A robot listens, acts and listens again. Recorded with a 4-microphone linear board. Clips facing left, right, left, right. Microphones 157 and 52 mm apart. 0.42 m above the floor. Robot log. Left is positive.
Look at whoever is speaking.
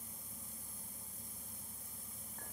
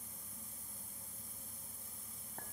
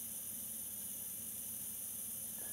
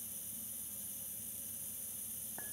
cmd idle
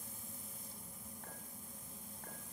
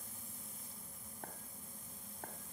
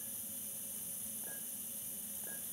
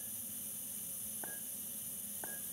cmd idle
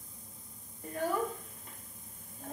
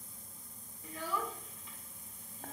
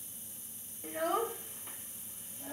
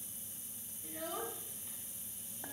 note: The child speaking: about 55° left or 125° left.
cmd yaw +55
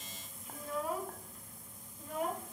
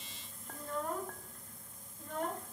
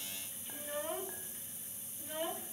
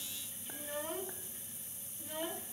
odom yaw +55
note: So it is at 10° left.
cmd yaw +10
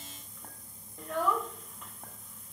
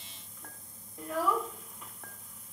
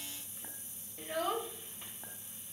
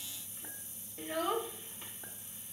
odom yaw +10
end: Found it: a child speaking, straight ahead.